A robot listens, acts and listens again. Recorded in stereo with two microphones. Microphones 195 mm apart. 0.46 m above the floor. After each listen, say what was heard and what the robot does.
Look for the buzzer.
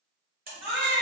The buzzer: about 50° right or 130° right. Turn 50° right.
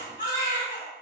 Keep listening.
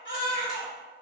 Keep listening.
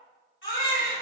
I heard a buzzer, but can't make it out now. It was about straight ahead or 80° right.